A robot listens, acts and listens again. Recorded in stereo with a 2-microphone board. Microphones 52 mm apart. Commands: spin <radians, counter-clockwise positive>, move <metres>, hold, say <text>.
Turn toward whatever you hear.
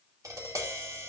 spin -1.57
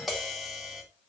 say Facing the tapping.